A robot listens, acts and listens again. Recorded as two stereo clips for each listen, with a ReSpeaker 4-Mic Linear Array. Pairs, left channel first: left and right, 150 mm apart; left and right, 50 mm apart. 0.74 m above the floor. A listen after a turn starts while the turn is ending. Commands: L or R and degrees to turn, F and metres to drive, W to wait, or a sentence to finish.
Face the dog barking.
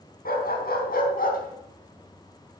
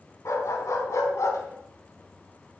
L90
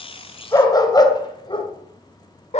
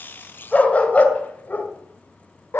L45
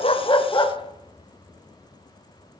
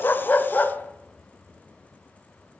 L30
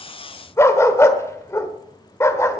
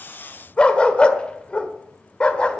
L20
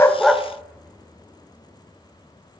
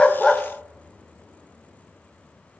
W
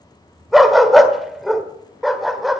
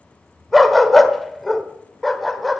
Facing the dog barking.